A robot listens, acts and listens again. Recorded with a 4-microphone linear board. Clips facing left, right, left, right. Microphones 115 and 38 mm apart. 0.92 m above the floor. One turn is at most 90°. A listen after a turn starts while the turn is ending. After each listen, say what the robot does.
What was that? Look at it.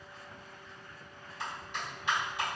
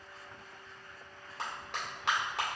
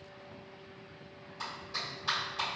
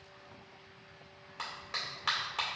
Turn 90° right.
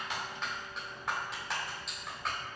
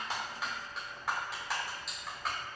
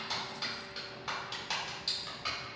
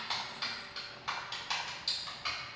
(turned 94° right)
Found it: a clap, straight ahead.